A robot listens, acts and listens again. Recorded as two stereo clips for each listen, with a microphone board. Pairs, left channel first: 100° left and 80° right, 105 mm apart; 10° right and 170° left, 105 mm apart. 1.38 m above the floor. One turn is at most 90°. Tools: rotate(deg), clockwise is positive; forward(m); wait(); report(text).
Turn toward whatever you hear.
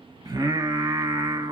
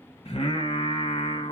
rotate(35)
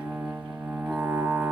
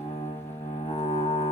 report("Facing the singing.")